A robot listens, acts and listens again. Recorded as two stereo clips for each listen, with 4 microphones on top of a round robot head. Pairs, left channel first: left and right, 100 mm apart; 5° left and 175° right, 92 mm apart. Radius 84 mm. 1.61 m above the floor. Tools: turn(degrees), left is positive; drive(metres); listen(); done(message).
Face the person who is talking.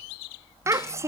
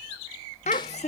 turn(degrees=-30)
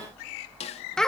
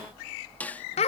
done("Facing the child speaking.")